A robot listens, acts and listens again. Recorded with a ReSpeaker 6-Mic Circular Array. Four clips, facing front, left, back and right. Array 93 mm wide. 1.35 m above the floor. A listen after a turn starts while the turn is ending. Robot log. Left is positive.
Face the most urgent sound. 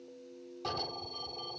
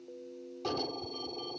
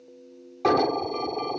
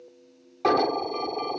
note: The alarm: 125° right.
cmd yaw -125
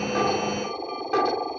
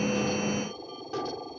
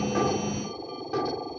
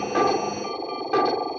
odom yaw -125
note: The alarm is now 55° right.
cmd yaw -55
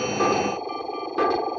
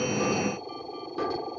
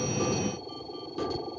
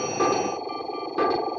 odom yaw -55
note: The alarm is now 35° right.
cmd yaw -35
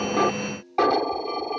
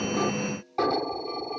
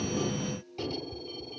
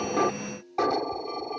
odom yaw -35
note: The alarm is now 10° right.
cmd yaw -10
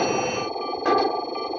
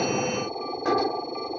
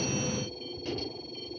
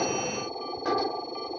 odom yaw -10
end: Facing the alarm.